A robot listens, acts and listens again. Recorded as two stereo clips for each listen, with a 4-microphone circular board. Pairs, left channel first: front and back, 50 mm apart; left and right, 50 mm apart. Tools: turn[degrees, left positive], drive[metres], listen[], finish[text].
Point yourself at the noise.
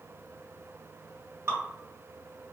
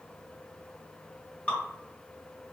Thought: The dripping: 150° left.
Action: turn[150]
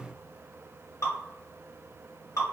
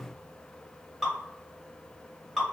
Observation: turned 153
Action: finish[Facing the dripping, 1 to 2 m away.]